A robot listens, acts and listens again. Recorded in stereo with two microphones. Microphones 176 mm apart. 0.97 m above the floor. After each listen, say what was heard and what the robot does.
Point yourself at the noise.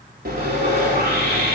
The sawing: about 60° right or 120° right. Turn 60° right.
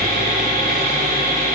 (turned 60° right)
So it is at 55° right. Turn 55° right.
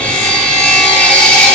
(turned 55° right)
The sawing is now 10° left. Turn 10° left.
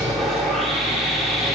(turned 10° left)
Found it: sawing, straight ahead, 2 to 4 m away.